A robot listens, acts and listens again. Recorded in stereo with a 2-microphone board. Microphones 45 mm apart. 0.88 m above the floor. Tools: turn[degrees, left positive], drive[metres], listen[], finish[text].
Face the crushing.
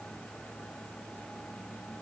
Action: listen[]
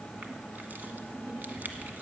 Thought: The crushing: about 45° right or 135° right.
Action: turn[-45]
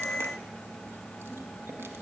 Action: listen[]
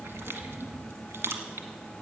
Thought: So it is at 85° right.
Action: turn[-85]
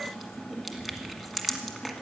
Action: finish[Facing the crushing, 1 to 2 m away.]